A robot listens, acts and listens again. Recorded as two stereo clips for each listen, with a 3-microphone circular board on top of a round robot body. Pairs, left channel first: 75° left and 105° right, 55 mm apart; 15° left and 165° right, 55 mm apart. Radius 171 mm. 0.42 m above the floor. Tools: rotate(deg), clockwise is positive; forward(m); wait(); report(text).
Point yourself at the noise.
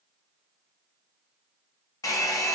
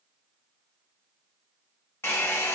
rotate(-60)
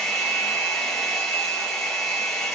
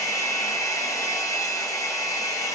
report("Facing the hair dryer.")